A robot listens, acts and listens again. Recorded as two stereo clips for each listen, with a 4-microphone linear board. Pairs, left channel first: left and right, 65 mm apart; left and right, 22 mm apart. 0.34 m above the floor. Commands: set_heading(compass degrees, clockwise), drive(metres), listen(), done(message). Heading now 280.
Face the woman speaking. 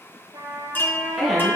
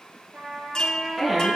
set_heading(250)
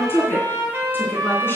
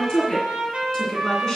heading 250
set_heading(105)
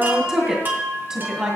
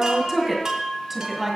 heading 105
set_heading(115)
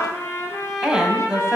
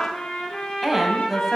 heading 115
set_heading(125)
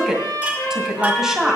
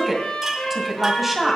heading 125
done("Found it: a woman speaking, straight ahead, 1 to 2 m away.")